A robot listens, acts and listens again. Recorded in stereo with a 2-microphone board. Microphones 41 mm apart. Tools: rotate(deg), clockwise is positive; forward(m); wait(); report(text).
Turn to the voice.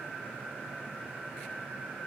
wait()
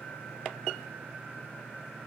wait()
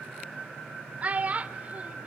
rotate(35)
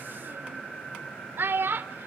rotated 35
rotate(110)
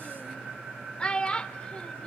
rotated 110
rotate(-25)
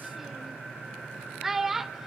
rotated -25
rotate(10)
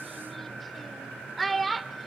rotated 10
report("Found it: a child speaking, straight ahead, under 1 m away.")